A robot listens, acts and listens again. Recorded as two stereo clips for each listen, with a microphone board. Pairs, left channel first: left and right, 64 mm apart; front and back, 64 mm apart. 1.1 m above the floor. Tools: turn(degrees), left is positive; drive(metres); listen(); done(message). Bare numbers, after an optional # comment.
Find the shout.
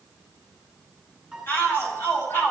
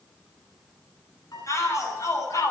# The shout: 35° left.
turn(35)
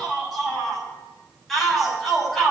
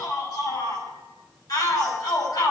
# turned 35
done("Facing the shout.")